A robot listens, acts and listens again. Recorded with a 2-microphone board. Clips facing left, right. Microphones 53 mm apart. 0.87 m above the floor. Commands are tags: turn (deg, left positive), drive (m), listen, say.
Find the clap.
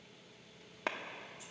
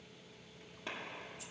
<turn deg="90"/>
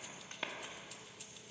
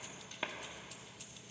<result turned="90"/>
<turn deg="-10"/>
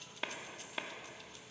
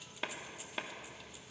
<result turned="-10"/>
<say>Found it: a clap, straight ahead, 1 to 2 m away.</say>